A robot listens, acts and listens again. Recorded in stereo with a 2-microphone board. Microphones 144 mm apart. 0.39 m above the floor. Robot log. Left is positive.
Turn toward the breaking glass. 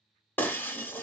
cmd yaw +30
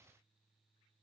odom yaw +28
cmd idle
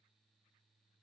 end: I heard breaking glass, but can't make it out now. It was about 15° right or 140° left.